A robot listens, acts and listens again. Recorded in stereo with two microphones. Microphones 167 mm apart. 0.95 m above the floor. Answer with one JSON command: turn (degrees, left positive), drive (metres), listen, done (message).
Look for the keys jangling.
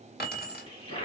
{"turn": 70}
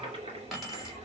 {"done": "Facing the keys jangling, 2 to 4 m away."}